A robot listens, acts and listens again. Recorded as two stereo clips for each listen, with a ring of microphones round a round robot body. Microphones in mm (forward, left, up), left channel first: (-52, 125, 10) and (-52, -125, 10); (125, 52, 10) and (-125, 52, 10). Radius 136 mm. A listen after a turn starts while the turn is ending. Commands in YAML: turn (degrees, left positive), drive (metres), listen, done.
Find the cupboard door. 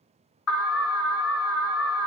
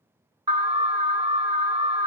listen: true
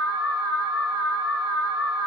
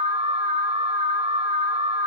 listen: true
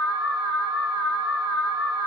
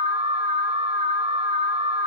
done: "I can't make out a cupboard door, only an alarm."